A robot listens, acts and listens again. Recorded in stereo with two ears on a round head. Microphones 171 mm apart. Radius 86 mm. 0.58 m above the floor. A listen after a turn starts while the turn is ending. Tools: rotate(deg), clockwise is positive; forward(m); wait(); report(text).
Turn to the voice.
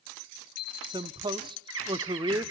rotate(25)
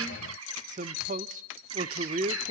rotate(125)
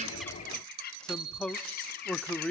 report("Found it: a man speaking, straight ahead.")